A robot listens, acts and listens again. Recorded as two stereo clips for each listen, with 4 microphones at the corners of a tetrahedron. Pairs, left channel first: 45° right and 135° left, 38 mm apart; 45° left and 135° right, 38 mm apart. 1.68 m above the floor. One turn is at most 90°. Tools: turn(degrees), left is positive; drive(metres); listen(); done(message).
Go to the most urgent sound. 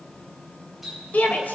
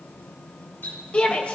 turn(degrees=-10)
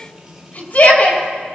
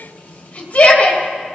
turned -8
drive(metres=1.0)
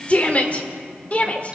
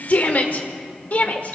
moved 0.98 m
drive(metres=1.0)
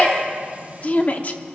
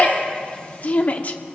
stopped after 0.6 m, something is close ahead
done("I am next to the shout.")